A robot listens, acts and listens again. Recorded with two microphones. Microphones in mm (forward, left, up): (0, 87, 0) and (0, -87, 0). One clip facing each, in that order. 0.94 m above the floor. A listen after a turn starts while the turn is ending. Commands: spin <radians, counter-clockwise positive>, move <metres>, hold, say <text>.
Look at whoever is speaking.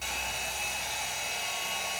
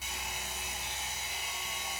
hold
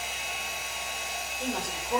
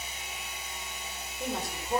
spin 0.52
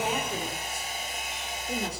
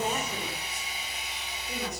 spin 2.62
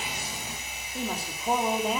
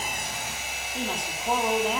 say Found it: a woman speaking, straight ahead, 2 to 4 m away.